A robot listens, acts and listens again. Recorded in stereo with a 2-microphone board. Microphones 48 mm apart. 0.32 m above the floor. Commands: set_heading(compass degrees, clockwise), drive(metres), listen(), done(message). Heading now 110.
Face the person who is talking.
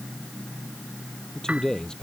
set_heading(80)
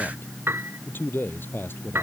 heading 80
set_heading(305)
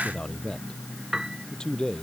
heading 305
set_heading(290)
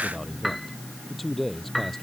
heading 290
done("Facing the man speaking.")